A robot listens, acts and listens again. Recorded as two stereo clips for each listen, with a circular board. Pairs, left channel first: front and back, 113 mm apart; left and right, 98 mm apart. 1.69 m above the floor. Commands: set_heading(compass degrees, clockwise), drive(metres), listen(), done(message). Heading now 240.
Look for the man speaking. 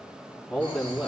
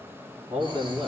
set_heading(335)
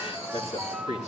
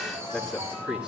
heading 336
set_heading(346)
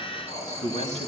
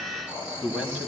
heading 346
set_heading(356)
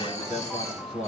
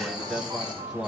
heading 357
set_heading(7)
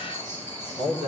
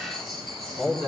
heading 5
done("Facing the man speaking, 2 to 4 m away.")